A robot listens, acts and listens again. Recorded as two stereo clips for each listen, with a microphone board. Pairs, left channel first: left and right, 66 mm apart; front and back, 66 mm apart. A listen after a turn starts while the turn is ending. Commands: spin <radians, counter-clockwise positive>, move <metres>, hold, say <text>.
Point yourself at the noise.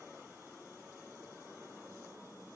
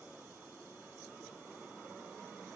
hold
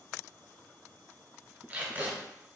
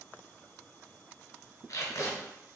spin -0.61
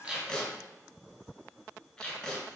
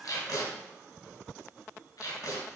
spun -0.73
spin 0.17
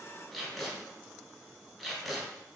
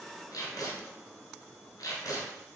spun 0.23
say Facing the tape being pulled, 1 to 2 m away.